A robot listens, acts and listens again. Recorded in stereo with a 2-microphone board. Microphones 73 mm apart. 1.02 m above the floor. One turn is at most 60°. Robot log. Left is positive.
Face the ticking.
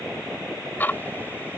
note: The ticking: about 25° left or 155° left.
cmd yaw +25
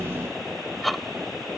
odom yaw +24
end: Found it: ticking, straight ahead.